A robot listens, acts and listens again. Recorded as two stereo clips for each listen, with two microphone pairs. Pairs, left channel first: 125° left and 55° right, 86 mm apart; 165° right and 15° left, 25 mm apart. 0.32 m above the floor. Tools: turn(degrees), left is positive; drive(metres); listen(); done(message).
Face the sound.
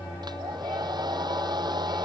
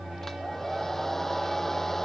turn(degrees=-90)
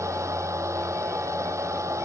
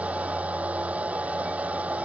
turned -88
done("Found it: a hair dryer, straight ahead.")